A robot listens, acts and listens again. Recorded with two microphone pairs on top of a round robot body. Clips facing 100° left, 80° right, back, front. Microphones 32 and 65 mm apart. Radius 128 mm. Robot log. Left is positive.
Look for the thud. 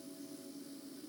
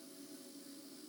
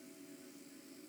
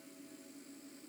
cmd idle
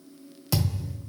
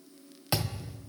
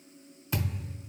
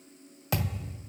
note: The thud: 20° right.
cmd yaw -20
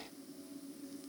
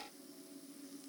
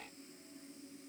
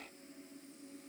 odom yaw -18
end: Facing where the thud came from. I can't hear it now.